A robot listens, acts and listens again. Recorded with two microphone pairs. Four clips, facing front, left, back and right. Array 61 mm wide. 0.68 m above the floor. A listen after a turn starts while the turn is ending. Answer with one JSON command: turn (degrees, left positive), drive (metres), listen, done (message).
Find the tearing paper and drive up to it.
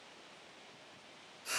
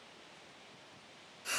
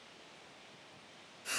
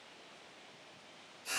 {"listen": true}
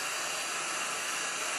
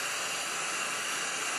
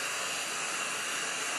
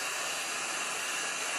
{"listen": true}
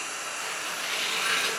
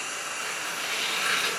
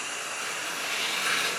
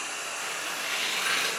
{"turn": 50}
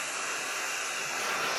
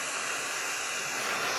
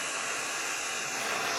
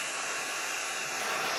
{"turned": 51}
{"listen": true}
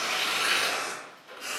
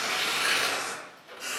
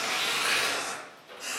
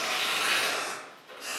{"drive": 1.0}
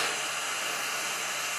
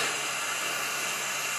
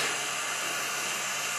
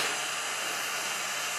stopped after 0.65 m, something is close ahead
{"listen": true}
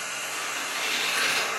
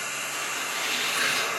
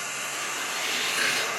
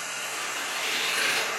{"done": "Arrived at the tearing paper, straight ahead."}